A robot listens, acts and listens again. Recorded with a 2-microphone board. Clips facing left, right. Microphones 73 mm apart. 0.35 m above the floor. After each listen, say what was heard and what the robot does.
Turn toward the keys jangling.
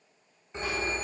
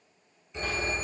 Keep listening.
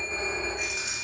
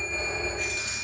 Turn 30° left.
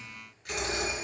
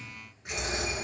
So it is at 25° right. Turn 25° right.
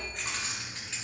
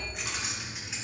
The keys jangling is now 15° right. Turn 15° right.
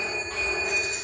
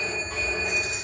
Keep listening.
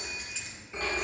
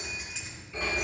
The keys jangling is now 10° right. Turn 10° right.
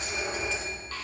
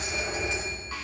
Keep listening.
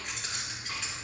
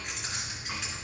Facing the keys jangling, 2 to 4 m away.